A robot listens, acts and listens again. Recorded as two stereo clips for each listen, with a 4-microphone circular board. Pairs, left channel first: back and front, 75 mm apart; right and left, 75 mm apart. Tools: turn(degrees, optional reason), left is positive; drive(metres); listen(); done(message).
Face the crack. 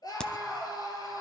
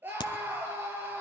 turn(degrees=-100, reason="The crack: 100° right.")
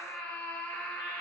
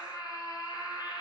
done("Facing where the crack came from. I can't hear it now.")